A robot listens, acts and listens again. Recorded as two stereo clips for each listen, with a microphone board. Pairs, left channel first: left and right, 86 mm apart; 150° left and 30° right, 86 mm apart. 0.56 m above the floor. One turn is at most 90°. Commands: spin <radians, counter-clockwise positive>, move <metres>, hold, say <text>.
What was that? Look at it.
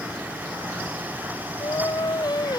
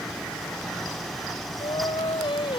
spin 1.57
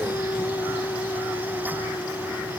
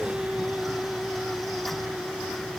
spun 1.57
spin 0.70
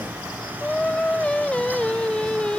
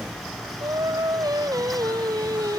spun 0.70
spin 0.17
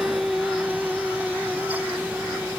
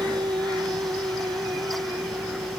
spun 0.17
say Facing the singing.